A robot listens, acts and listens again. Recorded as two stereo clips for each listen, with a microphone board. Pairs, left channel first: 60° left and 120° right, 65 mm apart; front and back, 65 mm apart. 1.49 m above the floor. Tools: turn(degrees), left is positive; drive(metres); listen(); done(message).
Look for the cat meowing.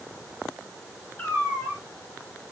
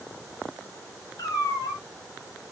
turn(degrees=-10)
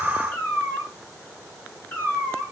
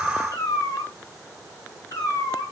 done("Found it: a cat meowing, straight ahead, 2 to 4 m away.")